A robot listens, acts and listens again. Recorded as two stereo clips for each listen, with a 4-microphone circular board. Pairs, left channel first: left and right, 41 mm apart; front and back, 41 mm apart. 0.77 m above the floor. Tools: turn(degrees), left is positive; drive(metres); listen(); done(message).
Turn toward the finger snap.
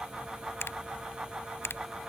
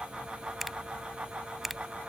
turn(degrees=95)
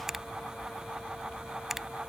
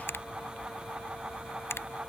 done("Facing the finger snap.")